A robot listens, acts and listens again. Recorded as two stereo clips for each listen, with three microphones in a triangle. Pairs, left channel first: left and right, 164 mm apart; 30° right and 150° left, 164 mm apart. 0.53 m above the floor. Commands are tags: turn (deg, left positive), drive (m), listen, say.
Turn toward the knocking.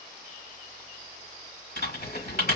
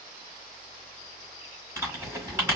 <listen/>
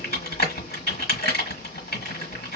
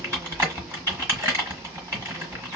<listen/>
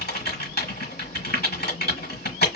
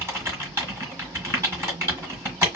<say>I can't make out knocking, only typing on a keyboard.</say>